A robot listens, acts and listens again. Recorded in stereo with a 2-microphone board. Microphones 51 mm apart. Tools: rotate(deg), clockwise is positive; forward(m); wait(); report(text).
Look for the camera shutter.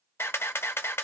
rotate(-55)
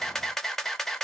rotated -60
rotate(-10)
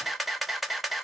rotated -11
report("Facing the camera shutter, under 1 m away.")